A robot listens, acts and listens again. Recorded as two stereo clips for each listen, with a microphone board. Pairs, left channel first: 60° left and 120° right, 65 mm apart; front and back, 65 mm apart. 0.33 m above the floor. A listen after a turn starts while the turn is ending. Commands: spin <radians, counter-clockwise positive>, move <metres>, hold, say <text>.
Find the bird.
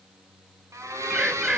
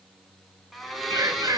spin 2.79
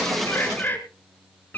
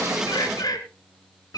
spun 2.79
say Facing the bird.